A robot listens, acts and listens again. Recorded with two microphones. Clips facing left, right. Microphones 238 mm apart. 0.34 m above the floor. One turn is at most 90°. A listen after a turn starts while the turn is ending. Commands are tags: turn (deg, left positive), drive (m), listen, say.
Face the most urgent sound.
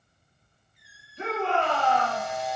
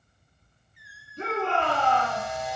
<turn deg="-50"/>
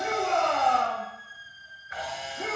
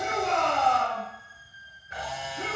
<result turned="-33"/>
<turn deg="-90"/>
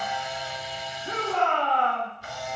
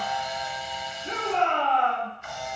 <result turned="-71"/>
<turn deg="-25"/>
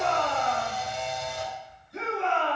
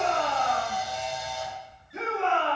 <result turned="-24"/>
<say>Facing the shout, over 4 m away.</say>